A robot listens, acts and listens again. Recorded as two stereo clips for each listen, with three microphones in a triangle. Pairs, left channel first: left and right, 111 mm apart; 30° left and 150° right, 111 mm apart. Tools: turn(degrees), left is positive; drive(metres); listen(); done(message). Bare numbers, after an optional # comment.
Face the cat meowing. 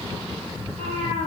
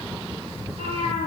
# The cat meowing: 115° right.
turn(-115)
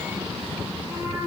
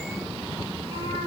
# The cat meowing is now 20° right.
turn(-20)
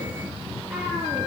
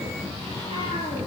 listen()
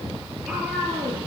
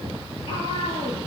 done("Found it: a cat meowing, straight ahead, over 4 m away.")